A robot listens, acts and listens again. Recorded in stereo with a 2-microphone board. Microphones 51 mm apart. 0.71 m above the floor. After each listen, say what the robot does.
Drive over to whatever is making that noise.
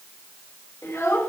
Turn 65° left.
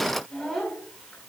Drive 1.0 m forward.
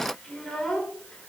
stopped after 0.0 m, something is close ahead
Turn 10° left.
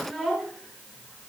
Something is in my way. I am facing the child speaking but have not reached it.